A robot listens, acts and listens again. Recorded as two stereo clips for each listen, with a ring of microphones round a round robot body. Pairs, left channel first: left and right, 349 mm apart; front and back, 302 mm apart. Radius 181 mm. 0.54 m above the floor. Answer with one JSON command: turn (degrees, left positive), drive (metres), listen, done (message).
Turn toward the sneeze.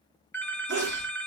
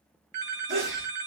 {"turn": -125}
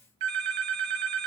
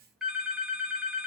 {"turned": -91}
{"turn": -35}
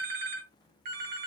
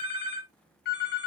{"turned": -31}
{"done": "I heard a sneeze from this way, but can't make it out now."}